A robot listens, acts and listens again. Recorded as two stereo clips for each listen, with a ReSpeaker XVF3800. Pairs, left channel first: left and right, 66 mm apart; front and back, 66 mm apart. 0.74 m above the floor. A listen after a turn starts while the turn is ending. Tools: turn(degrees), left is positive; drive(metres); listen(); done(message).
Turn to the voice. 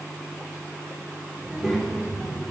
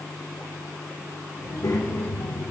done("Facing the child speaking, 1 to 2 m away.")